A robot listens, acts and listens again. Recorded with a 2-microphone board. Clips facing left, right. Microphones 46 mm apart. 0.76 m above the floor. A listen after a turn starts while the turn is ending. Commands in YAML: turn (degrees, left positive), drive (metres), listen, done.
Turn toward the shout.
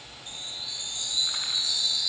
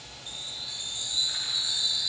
listen: true
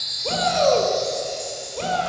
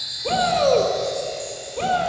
turn: -30
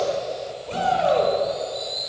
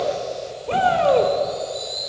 turn: -145
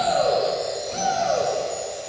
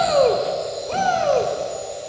turn: -45
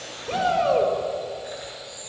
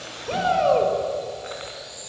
turn: -10
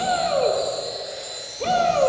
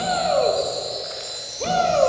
done: "Found it: a shout, straight ahead."